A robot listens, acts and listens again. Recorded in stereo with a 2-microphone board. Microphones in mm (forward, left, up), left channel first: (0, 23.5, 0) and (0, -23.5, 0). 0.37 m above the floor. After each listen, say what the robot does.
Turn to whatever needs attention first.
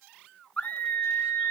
Turn 35° left.
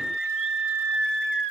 Found it: a scream, straight ahead, over 4 m away.